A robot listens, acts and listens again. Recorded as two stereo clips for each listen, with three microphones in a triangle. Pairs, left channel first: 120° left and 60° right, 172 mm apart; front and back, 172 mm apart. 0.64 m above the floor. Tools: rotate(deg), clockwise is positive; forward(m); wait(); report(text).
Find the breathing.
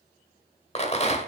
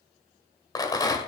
wait()
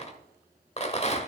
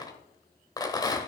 wait()
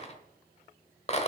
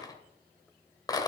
report("I can't make out breathing, only a rattle.")